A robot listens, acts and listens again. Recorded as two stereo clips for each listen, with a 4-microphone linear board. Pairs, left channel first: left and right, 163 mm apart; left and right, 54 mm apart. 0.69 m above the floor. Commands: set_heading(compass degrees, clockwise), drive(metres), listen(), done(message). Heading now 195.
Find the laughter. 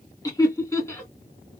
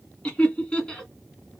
set_heading(175)
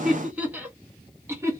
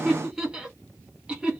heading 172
set_heading(192)
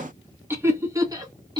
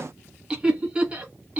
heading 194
set_heading(219)
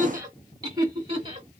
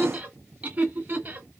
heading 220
set_heading(255)
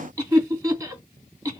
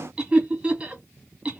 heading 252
set_heading(267)
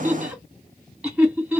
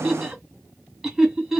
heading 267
done("Found it: laughter, straight ahead.")